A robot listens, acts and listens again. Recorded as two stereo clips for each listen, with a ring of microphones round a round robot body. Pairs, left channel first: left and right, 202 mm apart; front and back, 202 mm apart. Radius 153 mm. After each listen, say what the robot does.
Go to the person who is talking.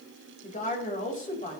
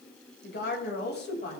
Turn 40° left.
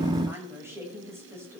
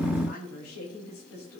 Turn 10° right.
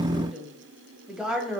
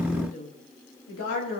Drive 1.0 m forward.
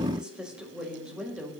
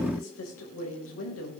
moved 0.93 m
Drive 1.0 m forward.
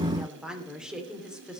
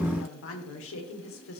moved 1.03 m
Drive 1.0 m forward.
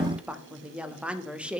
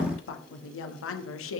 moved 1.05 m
Drive 1.0 m forward.
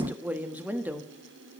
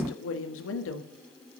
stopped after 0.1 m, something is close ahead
Turn 10° right.
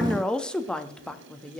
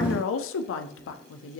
Arrived at the woman speaking, straight ahead.